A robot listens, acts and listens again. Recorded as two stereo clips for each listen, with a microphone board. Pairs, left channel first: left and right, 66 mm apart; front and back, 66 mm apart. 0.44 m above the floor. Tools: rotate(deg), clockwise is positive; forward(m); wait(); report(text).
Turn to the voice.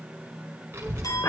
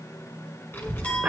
rotate(45)
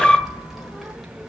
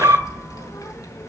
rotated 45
report("Found it: a child speaking, straight ahead.")